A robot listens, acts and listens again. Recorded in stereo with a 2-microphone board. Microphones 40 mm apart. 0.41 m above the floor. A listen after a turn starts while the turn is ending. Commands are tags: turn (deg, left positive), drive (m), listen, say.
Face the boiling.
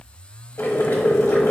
<turn deg="65"/>
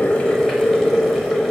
<say>Found it: boiling, straight ahead, 1 to 2 m away.</say>